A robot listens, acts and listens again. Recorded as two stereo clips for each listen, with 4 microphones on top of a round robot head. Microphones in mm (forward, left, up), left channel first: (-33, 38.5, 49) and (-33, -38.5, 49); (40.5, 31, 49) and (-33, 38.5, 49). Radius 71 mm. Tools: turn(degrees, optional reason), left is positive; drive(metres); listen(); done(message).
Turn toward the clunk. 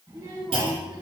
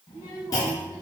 turn(degrees=-60, reason="The clunk: 60° right.")
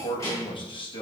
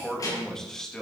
done("Facing where the clunk came from. I can't hear it now.")